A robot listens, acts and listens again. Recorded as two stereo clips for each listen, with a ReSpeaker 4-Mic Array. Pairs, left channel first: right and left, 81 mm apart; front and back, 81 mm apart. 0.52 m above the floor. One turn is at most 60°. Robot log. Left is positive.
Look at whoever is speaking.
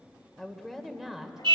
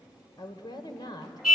end: Facing the woman speaking, 2 to 4 m away.